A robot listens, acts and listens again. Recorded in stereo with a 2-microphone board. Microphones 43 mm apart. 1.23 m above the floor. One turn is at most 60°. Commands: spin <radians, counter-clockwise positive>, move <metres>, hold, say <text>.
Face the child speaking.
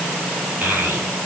spin -0.79
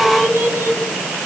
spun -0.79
spin -1.05
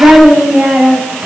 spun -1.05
spin -0.70
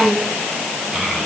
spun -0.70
say Found it: a child speaking, straight ahead, over 4 m away.